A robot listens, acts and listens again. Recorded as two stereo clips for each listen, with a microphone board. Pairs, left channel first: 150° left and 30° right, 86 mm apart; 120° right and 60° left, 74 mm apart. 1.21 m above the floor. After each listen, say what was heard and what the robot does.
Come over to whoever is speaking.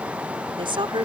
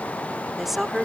The woman speaking: 25° right. Turn 25° right.
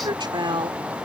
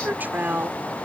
Drive 1.0 m forward.
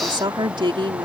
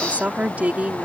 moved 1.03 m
The woman speaking is now 10° right. Turn 10° right.
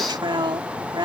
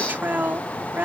Drive 1.0 m forward.
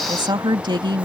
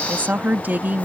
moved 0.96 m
Drive 1.0 m forward.
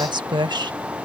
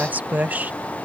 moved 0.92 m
Drive 1.0 m forward.
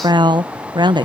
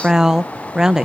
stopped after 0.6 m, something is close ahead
The woman speaking is now 20° right. Turn 20° right.
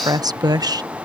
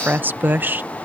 Arrived at the woman speaking, straight ahead.